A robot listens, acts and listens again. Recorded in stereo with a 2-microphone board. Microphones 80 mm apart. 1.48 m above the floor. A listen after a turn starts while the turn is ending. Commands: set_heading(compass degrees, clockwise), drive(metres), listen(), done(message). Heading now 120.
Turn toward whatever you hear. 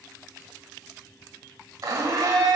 set_heading(160)
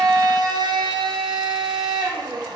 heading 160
set_heading(255)
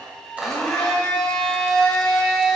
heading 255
done("Facing the blender, under 1 m away.")